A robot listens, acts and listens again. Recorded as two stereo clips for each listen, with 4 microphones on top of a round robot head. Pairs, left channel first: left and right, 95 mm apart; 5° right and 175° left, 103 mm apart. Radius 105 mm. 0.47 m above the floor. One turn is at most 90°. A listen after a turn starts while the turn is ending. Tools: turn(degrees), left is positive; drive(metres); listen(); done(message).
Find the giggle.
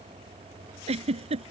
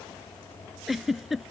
turn(degrees=-90)
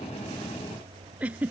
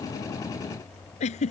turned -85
turn(degrees=-10)
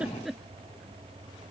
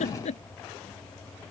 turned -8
done("Facing the giggle.")